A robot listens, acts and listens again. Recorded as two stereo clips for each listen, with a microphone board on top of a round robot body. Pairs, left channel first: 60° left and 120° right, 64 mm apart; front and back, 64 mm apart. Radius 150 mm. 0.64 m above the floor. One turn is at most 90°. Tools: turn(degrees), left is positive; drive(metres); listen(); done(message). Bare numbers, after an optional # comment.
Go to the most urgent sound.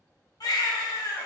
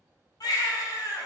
# The baby crying: 30° left.
turn(30)
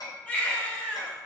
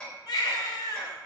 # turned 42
# The baby crying is now 10° right.
turn(-10)
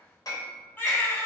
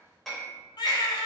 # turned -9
drive(1.0)
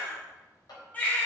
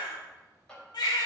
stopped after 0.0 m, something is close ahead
# The baby crying is now 10° right.
turn(-10)
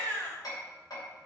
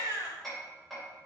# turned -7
done("Blocked. The baby crying is further on, straight ahead.")